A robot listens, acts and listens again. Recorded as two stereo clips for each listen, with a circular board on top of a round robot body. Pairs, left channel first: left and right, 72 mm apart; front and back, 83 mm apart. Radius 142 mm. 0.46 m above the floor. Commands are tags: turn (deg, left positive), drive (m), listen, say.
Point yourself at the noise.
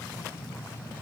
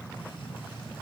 <listen/>
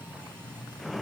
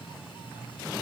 <listen/>
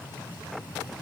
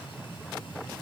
<say>I can't make out anything.</say>